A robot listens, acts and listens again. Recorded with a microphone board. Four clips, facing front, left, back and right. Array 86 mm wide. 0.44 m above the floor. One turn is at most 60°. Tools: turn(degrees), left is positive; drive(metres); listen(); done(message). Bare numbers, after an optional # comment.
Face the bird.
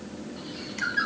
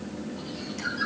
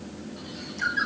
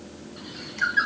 # The bird: 90° right.
turn(-60)
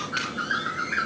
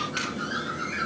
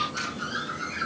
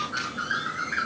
# The bird is now 30° right.
turn(-30)
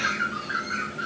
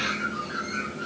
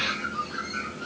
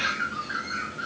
# The bird is now 20° right.
turn(-20)
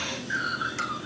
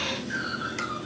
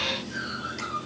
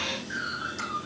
done("Facing the bird, over 4 m away.")